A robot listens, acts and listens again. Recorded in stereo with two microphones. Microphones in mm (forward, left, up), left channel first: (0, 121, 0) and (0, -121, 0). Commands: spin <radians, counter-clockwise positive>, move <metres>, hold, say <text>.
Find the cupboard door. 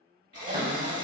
spin -0.61
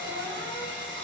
hold
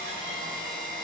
hold
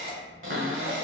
spin -1.83
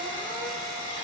hold
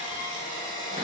hold
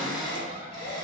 spin -0.61
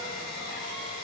hold
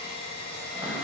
spin -0.17
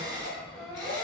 say Facing the cupboard door.